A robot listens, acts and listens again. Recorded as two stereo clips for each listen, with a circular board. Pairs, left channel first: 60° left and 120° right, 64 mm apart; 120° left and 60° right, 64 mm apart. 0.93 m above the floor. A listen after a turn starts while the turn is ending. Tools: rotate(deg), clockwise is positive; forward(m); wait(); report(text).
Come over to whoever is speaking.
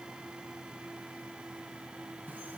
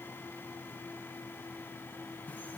wait()
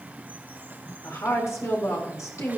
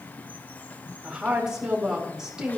rotate(-20)
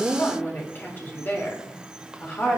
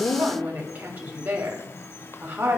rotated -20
forward(1.0)
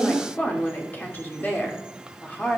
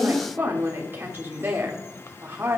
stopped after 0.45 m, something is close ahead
report("Something is in my way. I am facing the woman speaking but have not reached it.")